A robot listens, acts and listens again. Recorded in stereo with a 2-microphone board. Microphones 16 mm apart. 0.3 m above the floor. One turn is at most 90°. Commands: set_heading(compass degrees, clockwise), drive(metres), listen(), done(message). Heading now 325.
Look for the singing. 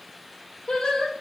set_heading(285)
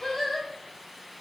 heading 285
done("Found it: singing, straight ahead, 2 to 4 m away.")